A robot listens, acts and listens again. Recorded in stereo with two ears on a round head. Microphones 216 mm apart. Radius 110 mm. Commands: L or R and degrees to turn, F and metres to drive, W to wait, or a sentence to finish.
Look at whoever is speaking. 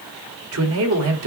R60
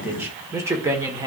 R15
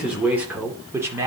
R10
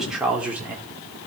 Facing the man speaking, 1 to 2 m away.